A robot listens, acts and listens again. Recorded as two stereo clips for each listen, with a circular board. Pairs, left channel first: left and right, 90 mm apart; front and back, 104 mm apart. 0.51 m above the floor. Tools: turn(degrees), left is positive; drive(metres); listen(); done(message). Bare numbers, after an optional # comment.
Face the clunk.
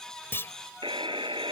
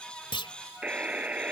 # The clunk: 30° left.
turn(30)
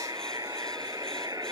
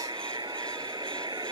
done("Facing where the clunk came from. I can't hear it now.")